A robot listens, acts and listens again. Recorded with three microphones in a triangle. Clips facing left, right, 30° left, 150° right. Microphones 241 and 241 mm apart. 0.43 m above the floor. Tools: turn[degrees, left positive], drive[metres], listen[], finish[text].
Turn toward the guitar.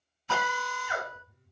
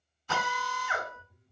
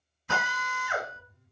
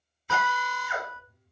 Thought: The guitar: 25° right.
Action: turn[-25]
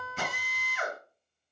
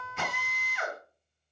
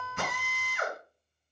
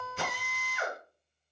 Action: finish[Found it: a guitar, straight ahead.]